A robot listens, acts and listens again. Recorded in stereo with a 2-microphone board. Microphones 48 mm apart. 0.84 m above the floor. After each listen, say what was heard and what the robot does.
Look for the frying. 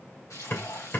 Turn 90° left.
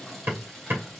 Facing the frying.